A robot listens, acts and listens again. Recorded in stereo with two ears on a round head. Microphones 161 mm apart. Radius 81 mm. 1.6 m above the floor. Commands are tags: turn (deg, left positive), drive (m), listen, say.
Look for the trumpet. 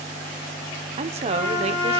<turn deg="70"/>
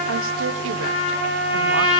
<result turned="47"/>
<turn deg="30"/>
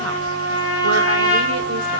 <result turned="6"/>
<turn deg="25"/>
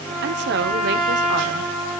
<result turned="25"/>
<say>Facing the trumpet.</say>